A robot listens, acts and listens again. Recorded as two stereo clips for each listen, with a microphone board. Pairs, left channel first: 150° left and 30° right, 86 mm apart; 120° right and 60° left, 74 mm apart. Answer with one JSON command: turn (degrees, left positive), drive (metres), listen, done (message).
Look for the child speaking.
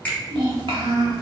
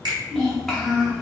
{"turn": -35}
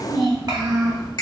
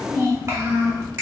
{"turn": 10}
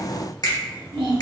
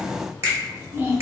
{"done": "Found it: a child speaking, straight ahead, 1 to 2 m away."}